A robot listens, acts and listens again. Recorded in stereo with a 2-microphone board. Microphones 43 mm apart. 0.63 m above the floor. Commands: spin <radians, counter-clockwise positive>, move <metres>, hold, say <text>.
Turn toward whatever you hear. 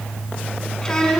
spin 0.52
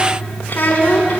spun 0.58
spin 2.27
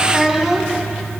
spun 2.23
say Found it: a child speaking, straight ahead, over 4 m away.